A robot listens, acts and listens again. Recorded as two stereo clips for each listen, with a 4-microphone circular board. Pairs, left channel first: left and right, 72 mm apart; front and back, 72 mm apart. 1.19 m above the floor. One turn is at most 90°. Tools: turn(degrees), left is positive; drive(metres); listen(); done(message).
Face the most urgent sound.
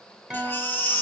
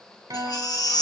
turn(degrees=30)
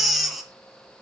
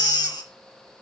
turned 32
done("Facing the baby crying, 1 to 2 m away.")